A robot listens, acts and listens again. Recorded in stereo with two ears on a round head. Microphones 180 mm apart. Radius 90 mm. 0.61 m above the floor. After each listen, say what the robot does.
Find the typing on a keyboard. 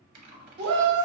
Turn 45° right.
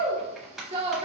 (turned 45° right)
Found it: typing on a keyboard, straight ahead, under 1 m away.